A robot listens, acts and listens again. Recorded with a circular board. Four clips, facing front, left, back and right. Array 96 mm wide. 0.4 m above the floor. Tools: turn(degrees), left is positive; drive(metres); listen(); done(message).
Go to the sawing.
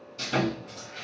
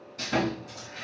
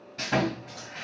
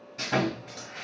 turn(degrees=-160)
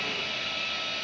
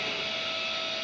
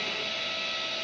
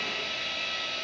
turn(degrees=-20)
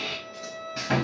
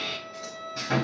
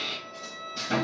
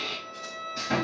drive(metres=1.0)
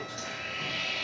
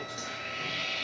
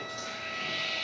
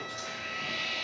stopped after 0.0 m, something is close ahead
done("Something is in my way. I am facing the sawing but have not reached it.")